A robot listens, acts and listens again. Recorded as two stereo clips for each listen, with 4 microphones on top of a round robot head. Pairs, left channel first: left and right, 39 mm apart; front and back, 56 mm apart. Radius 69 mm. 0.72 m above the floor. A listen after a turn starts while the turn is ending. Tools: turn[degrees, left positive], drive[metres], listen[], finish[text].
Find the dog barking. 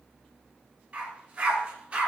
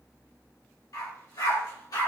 Thought: The dog barking: 25° right.
Action: turn[-25]
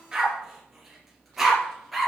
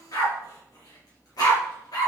Action: finish[Facing the dog barking.]